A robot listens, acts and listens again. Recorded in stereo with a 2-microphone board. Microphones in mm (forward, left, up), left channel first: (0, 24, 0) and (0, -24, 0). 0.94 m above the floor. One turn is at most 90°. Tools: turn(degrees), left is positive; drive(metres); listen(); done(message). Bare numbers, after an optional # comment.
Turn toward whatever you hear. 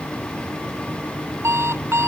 # The alarm clock: about 65° right or 115° right.
turn(-65)
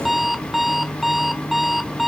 done("Facing the alarm clock.")